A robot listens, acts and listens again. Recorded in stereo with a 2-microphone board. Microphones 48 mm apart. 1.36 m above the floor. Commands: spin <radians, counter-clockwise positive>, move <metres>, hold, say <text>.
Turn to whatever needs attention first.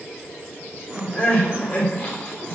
spin 0.52
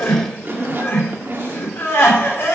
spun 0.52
spin 2.09
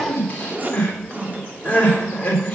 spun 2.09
spin 0.52
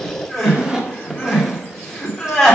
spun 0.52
say Facing the crying, 2 to 4 m away.